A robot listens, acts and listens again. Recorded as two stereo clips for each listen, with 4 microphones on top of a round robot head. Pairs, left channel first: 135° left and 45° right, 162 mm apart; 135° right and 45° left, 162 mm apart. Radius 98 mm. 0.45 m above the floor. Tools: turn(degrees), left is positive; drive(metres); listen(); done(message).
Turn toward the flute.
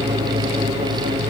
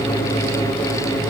listen()
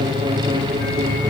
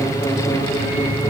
listen()
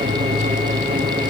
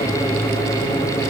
done("I can't make out a flute to turn to.")